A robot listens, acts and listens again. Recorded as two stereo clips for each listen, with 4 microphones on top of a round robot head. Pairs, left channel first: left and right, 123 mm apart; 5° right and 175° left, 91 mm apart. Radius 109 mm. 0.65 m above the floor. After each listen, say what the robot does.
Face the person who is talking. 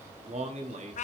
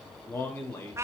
Turn 70° right.
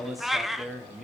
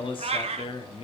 Found it: a man speaking, straight ahead.